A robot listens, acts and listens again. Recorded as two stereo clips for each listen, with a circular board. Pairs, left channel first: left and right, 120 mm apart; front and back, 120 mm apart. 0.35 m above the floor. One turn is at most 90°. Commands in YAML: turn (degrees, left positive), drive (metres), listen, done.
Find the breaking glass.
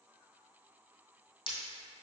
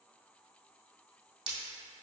turn: 90
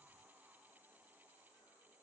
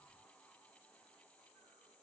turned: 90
turn: 45
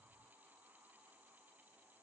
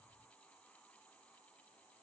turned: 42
done: "Facing where the breaking glass came from. I can't hear it now."